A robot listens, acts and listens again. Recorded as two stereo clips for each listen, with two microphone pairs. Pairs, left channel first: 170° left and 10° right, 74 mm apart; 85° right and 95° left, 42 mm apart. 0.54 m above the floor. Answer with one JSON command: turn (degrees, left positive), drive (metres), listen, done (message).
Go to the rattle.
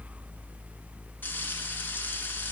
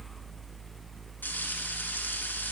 {"listen": true}
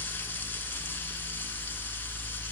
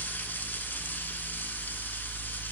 {"listen": true}
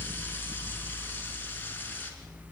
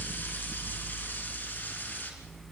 {"done": "I can't make out a rattle."}